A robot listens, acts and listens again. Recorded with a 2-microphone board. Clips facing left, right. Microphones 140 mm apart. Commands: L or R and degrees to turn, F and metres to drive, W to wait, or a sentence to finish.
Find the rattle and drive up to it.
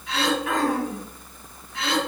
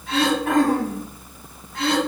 W
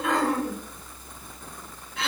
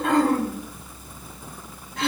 W
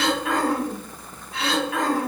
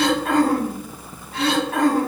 I can't make out a rattle to turn to.